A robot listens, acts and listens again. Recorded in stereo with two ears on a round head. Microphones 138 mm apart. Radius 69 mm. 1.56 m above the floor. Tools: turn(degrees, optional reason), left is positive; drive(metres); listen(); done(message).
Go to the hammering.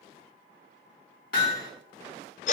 turn(degrees=70, reason="The hammering: about 70° left or 110° left.")
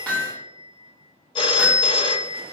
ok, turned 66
turn(degrees=10, reason="So it is at 10° left.")
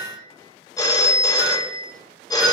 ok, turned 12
drive(metres=1.0)
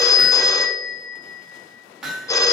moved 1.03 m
drive(metres=1.0)
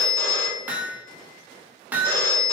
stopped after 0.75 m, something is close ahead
turn(degrees=-10, reason="The hammering is now 10° right.")
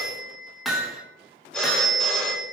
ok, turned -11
done("I am next to the hammering.")